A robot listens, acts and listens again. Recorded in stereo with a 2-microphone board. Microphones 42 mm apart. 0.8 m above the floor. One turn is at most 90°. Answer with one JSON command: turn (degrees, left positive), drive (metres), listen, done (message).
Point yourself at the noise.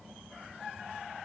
{"listen": true}
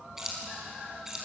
{"turn": -30}
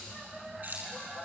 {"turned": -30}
{"turn": -90}
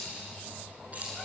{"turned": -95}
{"turn": -35}
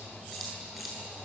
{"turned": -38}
{"done": "Facing the keys jangling."}